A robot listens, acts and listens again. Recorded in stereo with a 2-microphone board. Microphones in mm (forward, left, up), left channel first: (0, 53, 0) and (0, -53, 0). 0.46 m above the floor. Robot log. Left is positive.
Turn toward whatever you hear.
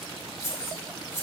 note: The keys jangling: about 25° left or 155° left.
cmd yaw +25
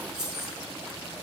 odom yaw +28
end: Found it: keys jangling, straight ahead.